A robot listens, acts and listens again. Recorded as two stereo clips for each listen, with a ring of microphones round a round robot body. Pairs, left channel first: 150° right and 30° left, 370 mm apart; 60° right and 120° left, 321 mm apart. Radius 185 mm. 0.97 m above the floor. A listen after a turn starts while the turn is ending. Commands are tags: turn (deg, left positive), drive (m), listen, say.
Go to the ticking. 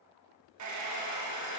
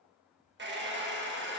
<listen/>
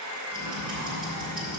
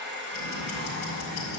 <turn deg="-50"/>
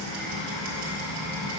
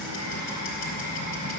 <drive m="1.0"/>
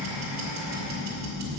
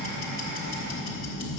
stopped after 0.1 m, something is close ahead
<say>Something is in my way. I am facing the ticking but have not reached it.</say>